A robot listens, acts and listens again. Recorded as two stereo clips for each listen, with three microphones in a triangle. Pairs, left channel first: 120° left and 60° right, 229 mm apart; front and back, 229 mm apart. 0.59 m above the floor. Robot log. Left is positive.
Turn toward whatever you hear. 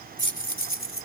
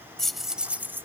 note: The keys jangling: 100° left.
cmd yaw +100
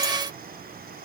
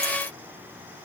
cmd idle
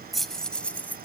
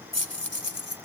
note: The keys jangling is now 40° left.
cmd yaw +40
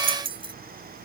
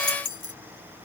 note: The keys jangling is now 10° left.
cmd yaw +10
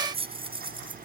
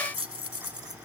note: The keys jangling is now 10° left.
cmd yaw +10
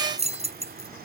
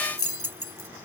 end: Facing the keys jangling.